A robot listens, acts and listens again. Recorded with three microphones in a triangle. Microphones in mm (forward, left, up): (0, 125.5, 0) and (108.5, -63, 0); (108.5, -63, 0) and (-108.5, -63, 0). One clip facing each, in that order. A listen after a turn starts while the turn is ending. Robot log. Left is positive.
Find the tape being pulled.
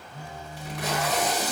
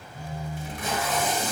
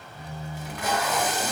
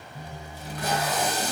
note: The tape being pulled: 130° left.
cmd yaw +130
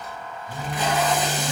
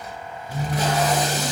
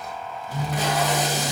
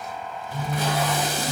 note: The tape being pulled is now 10° right.
cmd yaw -10
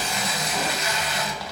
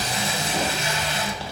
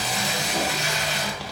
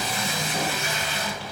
end: Found it: tape being pulled, straight ahead.